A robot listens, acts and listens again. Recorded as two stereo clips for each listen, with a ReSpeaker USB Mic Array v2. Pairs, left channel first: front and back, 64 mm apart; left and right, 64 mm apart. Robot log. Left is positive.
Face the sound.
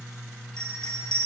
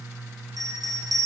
note: The bell: 80° right.
cmd yaw -80
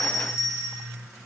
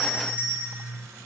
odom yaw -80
note: The bell is now 25° right.
cmd yaw -25
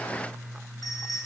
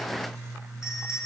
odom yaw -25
note: The bell is now 10° right.
cmd yaw -10
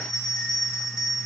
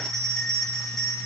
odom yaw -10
end: Found it: a bell, straight ahead, 2 to 4 m away.